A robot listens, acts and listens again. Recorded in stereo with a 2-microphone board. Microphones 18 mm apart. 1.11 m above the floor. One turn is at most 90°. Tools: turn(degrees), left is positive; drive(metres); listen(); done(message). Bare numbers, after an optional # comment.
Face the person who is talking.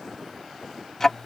listen()
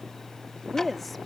turn(30)
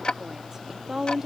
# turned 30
# So it is at 35° right.
turn(-35)
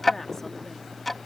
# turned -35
listen()
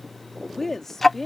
# The woman speaking is now 15° left.
turn(15)
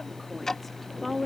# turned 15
done("Found it: a woman speaking, straight ahead.")